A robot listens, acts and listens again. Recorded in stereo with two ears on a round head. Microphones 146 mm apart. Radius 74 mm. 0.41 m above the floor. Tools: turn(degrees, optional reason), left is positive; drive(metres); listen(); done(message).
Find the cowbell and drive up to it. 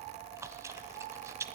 listen()
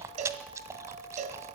turn(degrees=-45, reason="The cowbell: about 45° right or 135° right.")
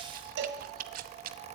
turn(degrees=-85, reason="So it is at 85° right.")
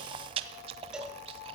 listen()
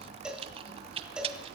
drive(metres=1.0)
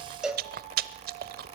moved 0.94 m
drive(metres=1.0)
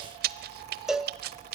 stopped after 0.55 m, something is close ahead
done("I am next to the cowbell.")